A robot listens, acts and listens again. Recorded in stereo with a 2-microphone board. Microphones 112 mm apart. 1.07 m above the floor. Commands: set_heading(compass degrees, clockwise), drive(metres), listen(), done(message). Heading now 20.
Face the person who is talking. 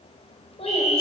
set_heading(330)
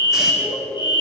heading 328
done("Found it: a child speaking, straight ahead.")